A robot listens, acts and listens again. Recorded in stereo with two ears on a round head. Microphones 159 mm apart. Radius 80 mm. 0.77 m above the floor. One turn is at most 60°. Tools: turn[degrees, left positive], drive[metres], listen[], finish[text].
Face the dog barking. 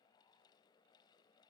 Action: listen[]
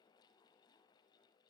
Action: listen[]
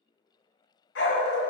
Thought: The dog barking: about 60° left or 120° left.
Action: turn[60]
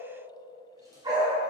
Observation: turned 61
Thought: So it is at 25° right.
Action: turn[-25]
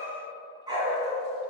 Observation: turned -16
Thought: The dog barking is now 25° right.
Action: turn[-25]
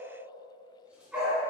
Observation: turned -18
Action: finish[Facing the dog barking, 2 to 4 m away.]